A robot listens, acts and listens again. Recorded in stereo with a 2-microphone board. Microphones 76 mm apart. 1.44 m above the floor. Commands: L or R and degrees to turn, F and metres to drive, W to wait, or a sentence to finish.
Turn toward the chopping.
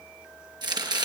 R65
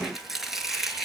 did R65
Found it: chopping, straight ahead, over 4 m away.